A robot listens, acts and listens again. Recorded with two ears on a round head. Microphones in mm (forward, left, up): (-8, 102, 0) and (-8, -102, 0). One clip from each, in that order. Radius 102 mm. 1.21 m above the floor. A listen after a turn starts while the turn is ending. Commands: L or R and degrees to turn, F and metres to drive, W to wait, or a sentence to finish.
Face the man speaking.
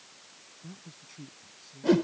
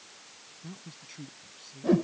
R30
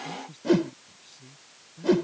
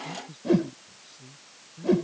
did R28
L15
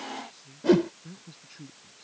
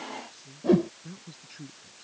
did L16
Found it: a man speaking, straight ahead.